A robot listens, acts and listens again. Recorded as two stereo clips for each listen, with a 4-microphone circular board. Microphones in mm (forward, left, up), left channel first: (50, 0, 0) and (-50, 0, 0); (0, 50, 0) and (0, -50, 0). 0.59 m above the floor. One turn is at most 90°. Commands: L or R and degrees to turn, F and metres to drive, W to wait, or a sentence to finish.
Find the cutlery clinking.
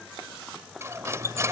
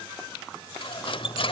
L90
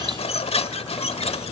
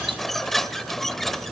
Found it: cutlery clinking, straight ahead.